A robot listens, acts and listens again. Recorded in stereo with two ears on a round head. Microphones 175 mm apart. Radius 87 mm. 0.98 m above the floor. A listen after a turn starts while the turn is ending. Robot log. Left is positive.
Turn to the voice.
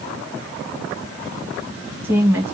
cmd yaw -30
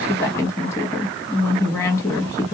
note: So it is at 20° left.
cmd yaw +20
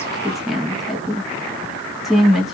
end: Facing the woman speaking.